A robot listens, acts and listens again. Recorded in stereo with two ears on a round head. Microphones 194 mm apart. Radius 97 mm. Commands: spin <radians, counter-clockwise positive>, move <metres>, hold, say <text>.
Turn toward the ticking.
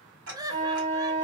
spin -1.31
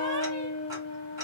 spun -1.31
hold
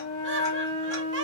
hold
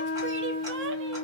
say I heard ticking, but can't make it out now. It was about straight ahead or 30° right.